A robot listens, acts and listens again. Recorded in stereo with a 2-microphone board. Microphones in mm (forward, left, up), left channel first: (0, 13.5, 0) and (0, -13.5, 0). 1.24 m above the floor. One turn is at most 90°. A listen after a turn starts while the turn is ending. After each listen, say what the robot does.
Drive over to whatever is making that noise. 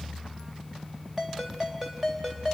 Turn 15° right.
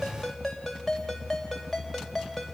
Drive 1.0 m forward.
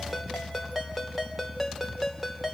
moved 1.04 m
Drive 1.0 m forward.
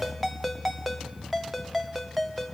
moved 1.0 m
Drive 1.0 m forward.
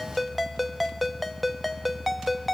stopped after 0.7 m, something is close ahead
Arrived at the ringtone, straight ahead.